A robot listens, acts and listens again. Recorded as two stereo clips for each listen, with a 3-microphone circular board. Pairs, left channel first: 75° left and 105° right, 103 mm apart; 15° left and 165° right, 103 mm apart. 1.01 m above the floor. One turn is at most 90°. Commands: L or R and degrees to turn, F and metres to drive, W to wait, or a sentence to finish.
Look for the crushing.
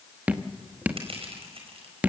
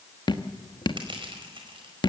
R90
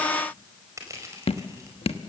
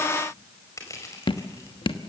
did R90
R45
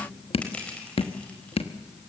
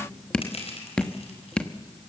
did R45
Facing the crushing.